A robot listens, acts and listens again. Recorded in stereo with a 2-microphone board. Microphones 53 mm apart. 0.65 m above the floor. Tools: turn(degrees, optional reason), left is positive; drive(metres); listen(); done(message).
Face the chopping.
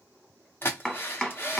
turn(degrees=30)
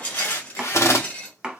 turn(degrees=-15, reason="So it is at 15° right.")
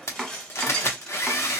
done("Facing the chopping.")